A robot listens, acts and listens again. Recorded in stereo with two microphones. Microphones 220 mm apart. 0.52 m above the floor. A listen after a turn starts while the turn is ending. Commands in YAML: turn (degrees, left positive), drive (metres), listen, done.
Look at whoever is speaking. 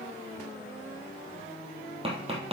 listen: true
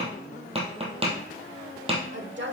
turn: -55
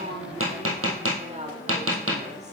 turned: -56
turn: -35
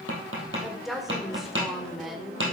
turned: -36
done: "Facing the woman speaking."